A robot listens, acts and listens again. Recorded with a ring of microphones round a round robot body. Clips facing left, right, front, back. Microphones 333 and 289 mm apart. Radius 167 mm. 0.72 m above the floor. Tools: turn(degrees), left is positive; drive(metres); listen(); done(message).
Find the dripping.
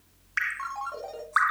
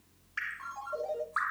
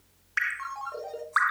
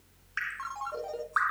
turn(degrees=55)
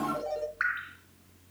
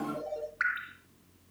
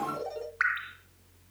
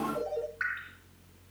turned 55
turn(degrees=-15)
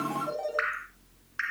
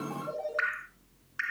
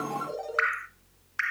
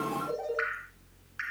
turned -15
done("Facing the dripping, 1 to 2 m away.")